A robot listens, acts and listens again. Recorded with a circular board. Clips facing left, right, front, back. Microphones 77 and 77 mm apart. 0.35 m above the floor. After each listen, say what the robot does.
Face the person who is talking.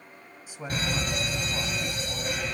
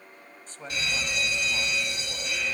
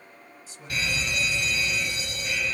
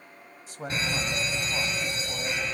Turn 165° left.
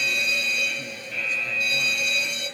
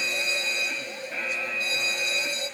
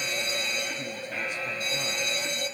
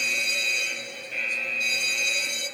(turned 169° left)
Keep listening.
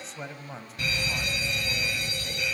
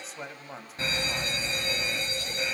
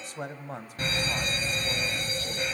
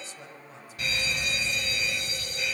Found it: a man speaking, straight ahead.